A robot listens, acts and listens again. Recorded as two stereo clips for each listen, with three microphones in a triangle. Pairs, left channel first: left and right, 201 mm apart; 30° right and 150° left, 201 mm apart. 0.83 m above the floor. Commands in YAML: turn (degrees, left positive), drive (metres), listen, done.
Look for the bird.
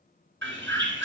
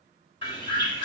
turn: -95
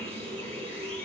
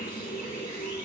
listen: true
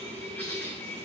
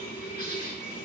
turn: 10
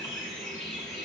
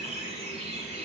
done: "Facing the bird, 2 to 4 m away."